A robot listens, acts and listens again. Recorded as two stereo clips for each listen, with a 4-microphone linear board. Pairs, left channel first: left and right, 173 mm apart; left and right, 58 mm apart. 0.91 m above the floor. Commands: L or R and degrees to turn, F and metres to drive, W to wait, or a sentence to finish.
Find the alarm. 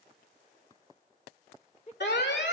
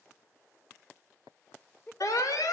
L90
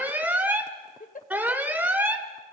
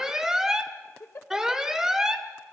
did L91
R10
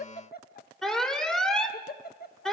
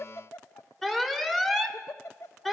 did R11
Facing the alarm, 1 to 2 m away.